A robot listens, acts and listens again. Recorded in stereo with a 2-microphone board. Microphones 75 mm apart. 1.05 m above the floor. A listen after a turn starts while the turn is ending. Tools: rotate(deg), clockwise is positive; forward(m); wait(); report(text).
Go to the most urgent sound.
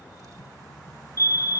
rotate(45)
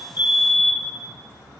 forward(1.0)
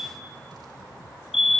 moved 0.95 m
forward(1.0)
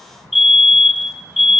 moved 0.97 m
forward(1.0)
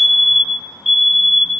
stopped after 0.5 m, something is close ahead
report("Arrived at the fire alarm, straight ahead.")